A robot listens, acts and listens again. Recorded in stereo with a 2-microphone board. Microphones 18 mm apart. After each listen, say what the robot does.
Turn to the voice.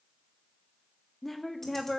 Turn 30° left.
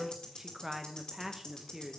Turn 20° right.
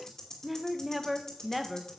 Found it: a woman speaking, straight ahead, under 1 m away.